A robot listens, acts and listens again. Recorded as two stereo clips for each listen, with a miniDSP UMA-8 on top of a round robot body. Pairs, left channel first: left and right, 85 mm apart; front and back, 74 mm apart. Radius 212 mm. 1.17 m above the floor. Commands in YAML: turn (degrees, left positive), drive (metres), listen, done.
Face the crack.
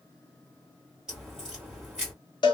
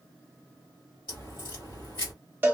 turn: -10
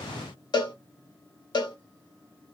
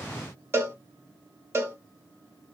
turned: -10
done: "Facing where the crack came from. I can't hear it now."